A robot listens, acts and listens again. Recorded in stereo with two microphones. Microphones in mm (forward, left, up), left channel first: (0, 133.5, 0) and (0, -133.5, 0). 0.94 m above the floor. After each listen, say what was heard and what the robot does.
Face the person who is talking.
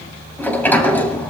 Keep listening.
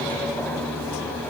Keep listening.
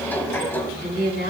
The woman speaking: about 40° left or 140° left. Turn 40° left.
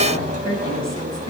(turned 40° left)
Keep listening.
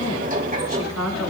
So it is at 100° left. Turn 100° left.
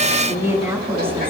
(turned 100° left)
The woman speaking is now 10° right. Turn 10° right.
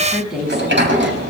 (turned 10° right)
Facing the woman speaking.